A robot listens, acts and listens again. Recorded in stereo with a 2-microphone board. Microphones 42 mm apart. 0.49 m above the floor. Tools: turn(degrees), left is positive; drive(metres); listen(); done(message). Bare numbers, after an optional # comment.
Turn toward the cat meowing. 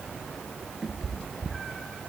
turn(30)
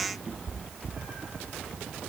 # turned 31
# So it is at 20° right.
turn(-20)
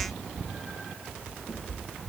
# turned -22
# The cat meowing is now 10° left.
turn(10)
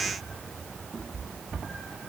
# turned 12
done("Found it: a cat meowing, straight ahead.")